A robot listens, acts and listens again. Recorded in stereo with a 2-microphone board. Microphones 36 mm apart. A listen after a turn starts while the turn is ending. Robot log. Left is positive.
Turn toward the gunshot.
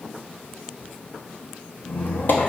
cmd idle
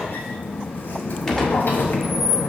cmd yaw +30
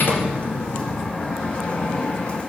cmd idle
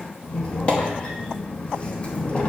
end: I heard a gunshot, but can't make it out now. It was about 20° right or 140° left.